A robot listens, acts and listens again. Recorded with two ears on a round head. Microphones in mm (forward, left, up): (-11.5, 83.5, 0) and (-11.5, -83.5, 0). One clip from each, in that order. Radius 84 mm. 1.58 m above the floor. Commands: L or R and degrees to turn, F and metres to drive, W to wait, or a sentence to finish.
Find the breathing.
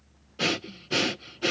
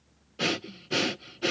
L30
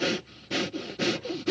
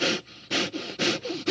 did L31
R20
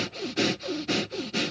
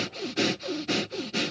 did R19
Found it: breathing, straight ahead.